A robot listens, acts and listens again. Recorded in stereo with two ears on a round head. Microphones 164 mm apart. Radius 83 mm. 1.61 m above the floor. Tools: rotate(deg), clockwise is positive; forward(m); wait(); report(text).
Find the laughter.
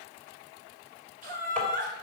rotate(50)
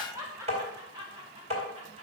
rotate(25)
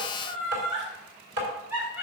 rotate(10)
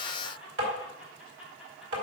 report("Found it: laughter, straight ahead.")